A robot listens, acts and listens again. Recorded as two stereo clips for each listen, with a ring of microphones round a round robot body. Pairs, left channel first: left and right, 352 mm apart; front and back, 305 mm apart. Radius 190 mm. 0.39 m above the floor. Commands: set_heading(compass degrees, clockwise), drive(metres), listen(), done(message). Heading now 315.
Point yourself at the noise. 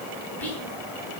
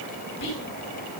done("Found it: whispering, straight ahead.")